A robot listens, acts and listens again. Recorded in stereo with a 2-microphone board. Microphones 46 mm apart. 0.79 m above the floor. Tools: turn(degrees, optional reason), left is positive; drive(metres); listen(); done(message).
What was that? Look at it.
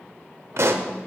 turn(degrees=-65, reason="The pop: about 65° right or 115° right.")
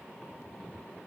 listen()
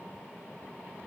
done("I heard a pop, but can't make it out now. It was about straight ahead or 50° right.")